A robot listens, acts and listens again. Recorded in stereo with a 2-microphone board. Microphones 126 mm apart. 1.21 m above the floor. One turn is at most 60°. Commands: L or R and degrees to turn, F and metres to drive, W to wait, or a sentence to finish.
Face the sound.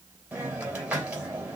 R30
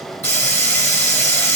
L20
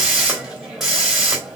Found it: a hiss, straight ahead, 2 to 4 m away.